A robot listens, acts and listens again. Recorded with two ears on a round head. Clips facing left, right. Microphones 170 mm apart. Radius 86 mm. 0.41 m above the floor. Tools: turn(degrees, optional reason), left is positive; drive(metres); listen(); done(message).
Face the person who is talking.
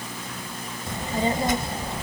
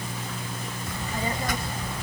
turn(degrees=25, reason="The child speaking: about 25° left or 155° left.")
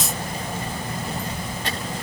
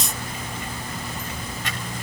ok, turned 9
turn(degrees=35, reason="The child speaking: about 35° left or 145° left.")
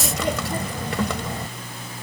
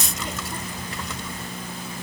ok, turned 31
turn(degrees=110, reason="So it is at 110° left.")
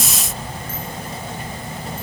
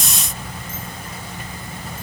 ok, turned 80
turn(degrees=30, reason="The child speaking is now 30° left.")
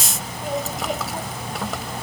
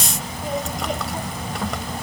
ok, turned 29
done("Found it: a child speaking, straight ahead.")